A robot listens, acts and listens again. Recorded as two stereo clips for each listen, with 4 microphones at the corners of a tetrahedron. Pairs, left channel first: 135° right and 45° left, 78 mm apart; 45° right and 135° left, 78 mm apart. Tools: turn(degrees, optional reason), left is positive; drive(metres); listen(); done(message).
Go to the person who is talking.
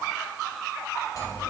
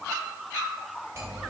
listen()
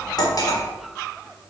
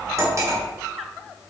listen()
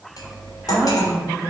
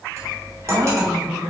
turn(degrees=130, reason="The woman speaking: 130° left.")
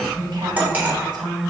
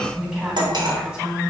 turn(degrees=60, reason="The woman speaking is now 60° left.")
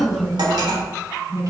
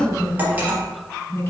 turn(degrees=10, reason="The woman speaking is now 10° left.")
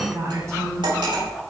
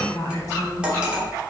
drive(metres=1.0)
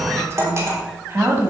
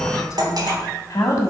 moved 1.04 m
drive(metres=1.0)
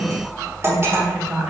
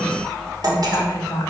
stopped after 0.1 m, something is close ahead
turn(degrees=-10, reason="The woman speaking is now 10° right.")
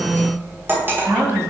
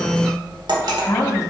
done("Arrived at the woman speaking, straight ahead.")